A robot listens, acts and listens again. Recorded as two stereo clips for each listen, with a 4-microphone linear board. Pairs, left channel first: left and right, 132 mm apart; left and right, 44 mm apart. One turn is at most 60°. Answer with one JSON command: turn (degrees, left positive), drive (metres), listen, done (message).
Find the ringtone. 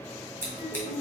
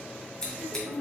{"turn": 60}
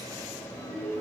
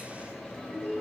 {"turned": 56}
{"turn": 60}
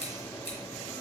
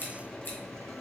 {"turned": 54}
{"listen": true}
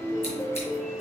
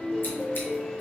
{"done": "Facing the ringtone, 1 to 2 m away."}